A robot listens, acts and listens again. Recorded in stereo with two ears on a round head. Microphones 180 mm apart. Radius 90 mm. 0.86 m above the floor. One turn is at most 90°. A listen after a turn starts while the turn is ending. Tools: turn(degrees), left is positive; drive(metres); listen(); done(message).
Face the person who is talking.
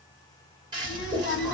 turn(degrees=65)
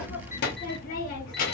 turn(degrees=50)
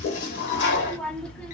done("Found it: a child speaking, straight ahead, 1 to 2 m away.")